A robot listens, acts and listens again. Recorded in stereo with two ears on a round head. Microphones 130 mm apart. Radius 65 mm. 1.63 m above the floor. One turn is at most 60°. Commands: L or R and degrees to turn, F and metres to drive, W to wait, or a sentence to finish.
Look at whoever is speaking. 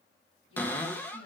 L35
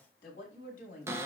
L60
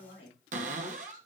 L60
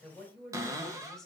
Facing the woman speaking, 2 to 4 m away.